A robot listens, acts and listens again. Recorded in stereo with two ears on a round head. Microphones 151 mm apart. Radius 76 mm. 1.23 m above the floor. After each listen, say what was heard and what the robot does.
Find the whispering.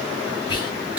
The whispering: about 25° left or 155° left. Turn 25° left.
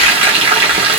Keep listening.
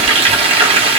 Keep listening.
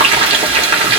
I heard whispering, but can't make it out now. It was about straight ahead or 130° left.